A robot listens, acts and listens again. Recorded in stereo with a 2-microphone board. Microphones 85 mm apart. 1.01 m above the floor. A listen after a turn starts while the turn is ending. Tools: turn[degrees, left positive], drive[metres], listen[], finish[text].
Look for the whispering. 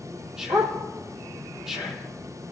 Action: turn[-30]
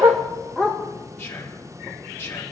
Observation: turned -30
Thought: So it is at 25° left.
Action: turn[25]
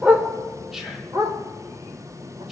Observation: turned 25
Action: finish[Facing the whispering.]